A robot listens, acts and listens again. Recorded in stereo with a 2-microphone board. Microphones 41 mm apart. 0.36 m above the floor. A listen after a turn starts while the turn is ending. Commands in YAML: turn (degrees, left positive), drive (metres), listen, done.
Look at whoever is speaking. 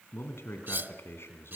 turn: 70
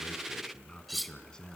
turn: 20
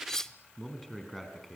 done: "Found it: a man speaking, straight ahead."